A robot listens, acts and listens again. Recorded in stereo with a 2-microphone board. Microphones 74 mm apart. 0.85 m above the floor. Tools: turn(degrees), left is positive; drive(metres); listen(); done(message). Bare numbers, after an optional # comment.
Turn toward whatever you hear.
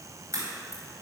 # The crack: about 45° right or 135° right.
turn(-45)
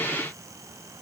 listen()
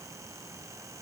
done("I heard a crack, but can't make it out now. It was about straight ahead or 90° right.")